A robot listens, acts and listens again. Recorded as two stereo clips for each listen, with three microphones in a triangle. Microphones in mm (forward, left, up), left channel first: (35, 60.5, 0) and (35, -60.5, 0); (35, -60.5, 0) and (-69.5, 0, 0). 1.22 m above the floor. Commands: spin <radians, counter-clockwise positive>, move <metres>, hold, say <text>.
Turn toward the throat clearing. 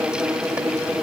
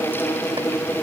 hold
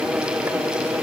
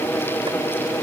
hold
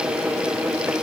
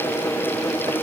say I can't make out throat clearing to turn to.